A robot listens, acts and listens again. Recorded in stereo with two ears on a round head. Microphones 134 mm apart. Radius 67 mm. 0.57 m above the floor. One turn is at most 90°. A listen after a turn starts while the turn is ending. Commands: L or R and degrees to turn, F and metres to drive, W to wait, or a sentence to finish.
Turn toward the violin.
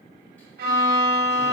R65
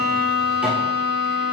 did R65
R30
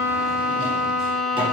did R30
Facing the violin.